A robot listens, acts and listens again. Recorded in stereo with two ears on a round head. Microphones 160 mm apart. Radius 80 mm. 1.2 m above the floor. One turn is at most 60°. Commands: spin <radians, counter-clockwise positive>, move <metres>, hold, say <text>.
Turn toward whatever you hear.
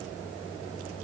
hold
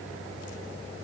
hold
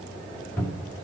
spin 0.52
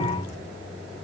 spin -0.35
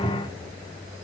say Found it: a cupboard door, straight ahead.